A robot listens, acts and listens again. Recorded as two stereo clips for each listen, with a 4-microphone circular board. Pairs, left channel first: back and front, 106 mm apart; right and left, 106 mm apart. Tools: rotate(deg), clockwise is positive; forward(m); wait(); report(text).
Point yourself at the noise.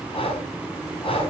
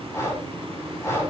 rotate(155)
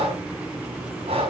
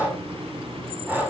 rotate(-20)
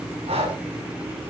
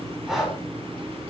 report("Facing the breathing.")